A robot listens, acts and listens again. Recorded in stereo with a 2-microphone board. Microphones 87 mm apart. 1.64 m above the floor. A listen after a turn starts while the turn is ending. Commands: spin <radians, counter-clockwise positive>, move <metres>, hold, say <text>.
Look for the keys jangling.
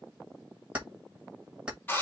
spin -0.52
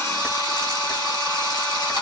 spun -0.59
hold
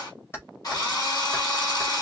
spin 0.52
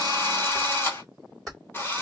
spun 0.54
say Found it: keys jangling, straight ahead, 2 to 4 m away.